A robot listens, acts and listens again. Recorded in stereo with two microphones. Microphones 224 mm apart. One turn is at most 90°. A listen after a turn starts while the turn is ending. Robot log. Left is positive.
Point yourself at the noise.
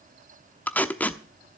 cmd yaw +30
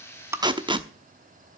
note: So it is at 20° right.
cmd yaw -20
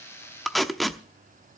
end: Found it: tape being pulled, straight ahead, under 1 m away.